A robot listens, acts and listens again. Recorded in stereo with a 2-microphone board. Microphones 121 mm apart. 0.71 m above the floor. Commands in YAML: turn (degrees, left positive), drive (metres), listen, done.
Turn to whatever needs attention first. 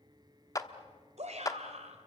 turn: -65
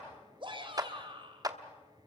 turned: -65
turn: -45
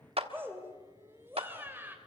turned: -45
turn: -20
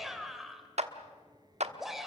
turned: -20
done: "Facing the shout, 2 to 4 m away."